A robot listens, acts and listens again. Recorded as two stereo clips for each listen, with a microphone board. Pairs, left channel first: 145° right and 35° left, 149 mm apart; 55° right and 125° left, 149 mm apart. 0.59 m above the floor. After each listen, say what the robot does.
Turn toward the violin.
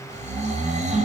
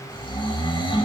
Keep listening.
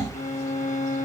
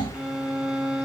Turn 155° right.
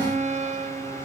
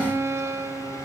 Turn 55° left.
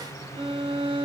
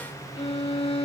Turn 15° right.
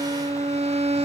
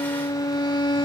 Facing the violin.